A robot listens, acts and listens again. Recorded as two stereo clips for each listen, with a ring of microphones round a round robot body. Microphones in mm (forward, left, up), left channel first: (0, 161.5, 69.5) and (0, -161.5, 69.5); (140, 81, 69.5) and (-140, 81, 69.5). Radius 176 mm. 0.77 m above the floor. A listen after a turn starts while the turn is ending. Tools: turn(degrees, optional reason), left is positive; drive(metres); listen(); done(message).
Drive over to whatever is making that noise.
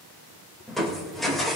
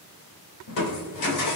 drive(metres=1.0)
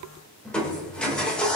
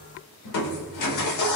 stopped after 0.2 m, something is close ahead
done("Something is in my way. I am facing the crushing but have not reached it.")